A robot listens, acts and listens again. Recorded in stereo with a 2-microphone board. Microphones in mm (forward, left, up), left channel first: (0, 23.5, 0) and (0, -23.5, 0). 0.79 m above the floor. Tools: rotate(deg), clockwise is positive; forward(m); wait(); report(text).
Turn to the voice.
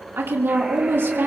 rotate(60)
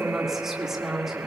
rotate(10)
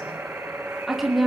report("Found it: a woman speaking, straight ahead.")